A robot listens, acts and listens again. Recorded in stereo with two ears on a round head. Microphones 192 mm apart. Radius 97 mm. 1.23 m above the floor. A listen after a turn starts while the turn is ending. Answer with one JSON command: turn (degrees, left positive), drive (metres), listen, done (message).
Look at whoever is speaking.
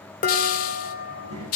{"turn": -90}
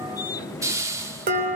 {"listen": true}
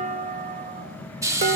{"turn": 15}
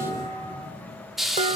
{"done": "Facing the child speaking."}